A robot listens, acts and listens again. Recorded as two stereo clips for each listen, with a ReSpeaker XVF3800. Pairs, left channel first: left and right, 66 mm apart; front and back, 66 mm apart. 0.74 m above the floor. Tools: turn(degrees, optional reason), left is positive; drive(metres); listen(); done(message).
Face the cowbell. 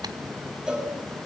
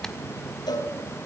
turn(degrees=-10, reason="The cowbell: 10° right.")
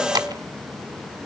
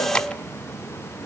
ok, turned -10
listen()
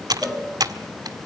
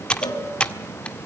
done("Found it: a cowbell, straight ahead.")